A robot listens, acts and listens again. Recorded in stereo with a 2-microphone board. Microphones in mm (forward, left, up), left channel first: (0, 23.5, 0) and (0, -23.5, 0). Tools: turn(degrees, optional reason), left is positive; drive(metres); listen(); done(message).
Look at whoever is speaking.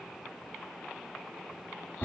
listen()
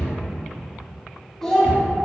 turn(degrees=30)
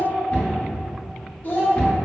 turn(degrees=135, reason="So it is at 135° left.")
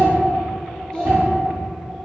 turn(degrees=20, reason="The child speaking is now 20° left.")
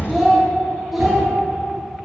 done("Facing the child speaking, under 1 m away.")